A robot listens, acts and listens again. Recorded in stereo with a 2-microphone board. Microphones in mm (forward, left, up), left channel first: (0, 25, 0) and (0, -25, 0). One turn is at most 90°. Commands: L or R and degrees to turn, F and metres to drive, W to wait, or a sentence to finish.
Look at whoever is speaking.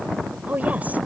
R30
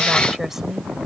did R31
Found it: a woman speaking, straight ahead.